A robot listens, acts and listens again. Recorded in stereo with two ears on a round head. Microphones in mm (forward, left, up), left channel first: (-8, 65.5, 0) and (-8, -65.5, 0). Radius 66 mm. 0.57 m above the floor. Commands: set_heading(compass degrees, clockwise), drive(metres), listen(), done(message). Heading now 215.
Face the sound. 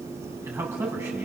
set_heading(230)
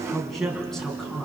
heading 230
set_heading(200)
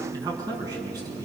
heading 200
set_heading(225)
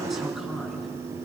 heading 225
done("Found it: a man speaking, straight ahead, over 4 m away.")